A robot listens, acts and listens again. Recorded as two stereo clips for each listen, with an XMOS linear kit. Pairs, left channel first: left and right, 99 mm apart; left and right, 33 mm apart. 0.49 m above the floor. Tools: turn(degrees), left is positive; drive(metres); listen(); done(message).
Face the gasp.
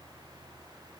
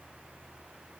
listen()
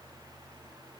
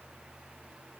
listen()
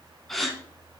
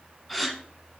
turn(degrees=30)
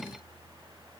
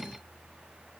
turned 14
listen()
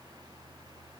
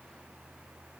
done("I heard a gasp, but can't make it out now. It was about 15° right or 165° left.")